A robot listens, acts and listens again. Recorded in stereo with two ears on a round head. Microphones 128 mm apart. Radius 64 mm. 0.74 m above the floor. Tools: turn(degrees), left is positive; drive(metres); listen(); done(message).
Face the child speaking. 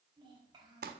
turn(degrees=-30)
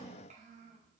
turn(degrees=-130)
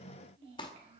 turn(degrees=-45)
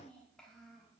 done("Found it: a child speaking, straight ahead.")